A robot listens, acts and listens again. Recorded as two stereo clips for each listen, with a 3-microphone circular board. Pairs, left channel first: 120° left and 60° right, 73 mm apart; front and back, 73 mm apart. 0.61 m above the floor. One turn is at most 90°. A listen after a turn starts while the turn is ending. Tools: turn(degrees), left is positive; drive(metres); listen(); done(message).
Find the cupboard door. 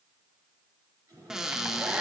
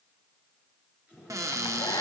turn(degrees=-90)
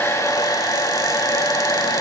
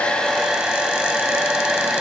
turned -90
turn(degrees=-50)
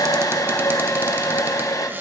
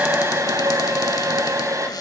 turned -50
listen()
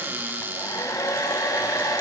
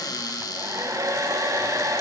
done("Found it: a cupboard door, straight ahead.")